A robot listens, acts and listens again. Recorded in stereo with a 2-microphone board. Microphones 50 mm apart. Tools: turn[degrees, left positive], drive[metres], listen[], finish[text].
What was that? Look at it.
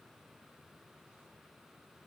Action: listen[]
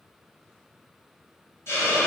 Thought: The hiss: about 55° left or 125° left.
Action: turn[55]
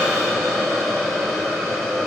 Action: finish[Facing the hiss, 1 to 2 m away.]